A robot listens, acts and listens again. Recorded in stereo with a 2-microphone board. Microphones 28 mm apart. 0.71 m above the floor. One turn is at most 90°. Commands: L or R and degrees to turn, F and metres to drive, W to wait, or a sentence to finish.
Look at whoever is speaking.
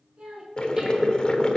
R35
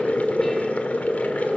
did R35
W
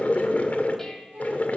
R90
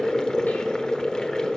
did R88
R20
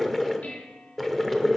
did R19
W
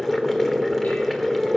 I heard a child speaking from this way, but can't make it out now.